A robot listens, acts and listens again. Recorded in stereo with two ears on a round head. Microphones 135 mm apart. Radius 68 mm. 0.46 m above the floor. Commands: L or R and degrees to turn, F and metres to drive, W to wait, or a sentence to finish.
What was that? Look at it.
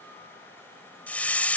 L30
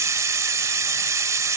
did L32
R25
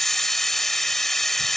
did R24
Facing the hiss.